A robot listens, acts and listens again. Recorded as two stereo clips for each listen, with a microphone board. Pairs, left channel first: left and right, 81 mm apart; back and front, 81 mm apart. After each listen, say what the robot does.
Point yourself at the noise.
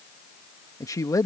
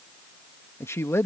Turn 130° left.
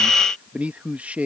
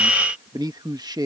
Turn 20° right.
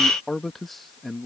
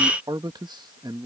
Facing the man speaking.